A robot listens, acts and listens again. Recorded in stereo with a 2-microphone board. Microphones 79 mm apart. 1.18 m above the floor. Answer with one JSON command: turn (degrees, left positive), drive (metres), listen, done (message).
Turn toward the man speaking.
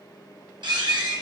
{"listen": true}
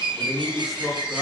{"turn": -30}
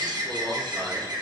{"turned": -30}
{"listen": true}
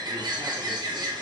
{"listen": true}
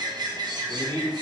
{"turn": -110}
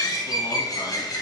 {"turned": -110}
{"listen": true}
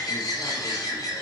{"listen": true}
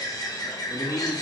{"turn": 40}
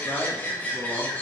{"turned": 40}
{"turn": 10}
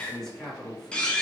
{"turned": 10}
{"done": "Found it: a man speaking, straight ahead, 1 to 2 m away."}